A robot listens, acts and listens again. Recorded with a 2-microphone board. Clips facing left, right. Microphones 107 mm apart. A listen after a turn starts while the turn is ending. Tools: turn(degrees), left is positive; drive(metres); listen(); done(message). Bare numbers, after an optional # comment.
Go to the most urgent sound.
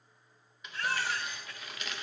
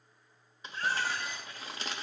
turn(90)
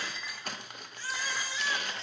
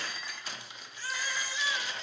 drive(1.0)
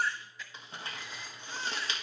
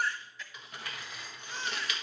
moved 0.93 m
drive(1.0)
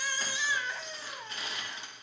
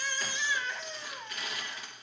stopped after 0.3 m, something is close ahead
# The baby crying is now 10° left.
turn(10)
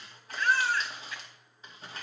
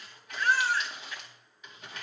done("I am next to the baby crying.")